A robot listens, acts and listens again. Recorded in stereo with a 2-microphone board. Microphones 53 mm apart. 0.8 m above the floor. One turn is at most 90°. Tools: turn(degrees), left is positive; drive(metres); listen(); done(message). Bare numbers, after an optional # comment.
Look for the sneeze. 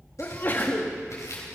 # The sneeze: about 40° left or 140° left.
turn(40)
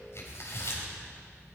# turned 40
listen()
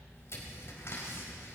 done("I heard a sneeze, but can't make it out now. It was about straight ahead or 100° left.")